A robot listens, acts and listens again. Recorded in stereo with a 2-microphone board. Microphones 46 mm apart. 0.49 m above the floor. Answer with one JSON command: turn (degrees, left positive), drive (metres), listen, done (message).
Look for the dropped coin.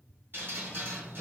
{"listen": true}
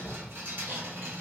{"listen": true}
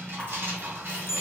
{"turn": 60}
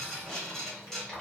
{"listen": true}
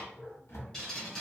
{"done": "I heard a dropped coin, but can't make it out now. It was about straight ahead or 60° left."}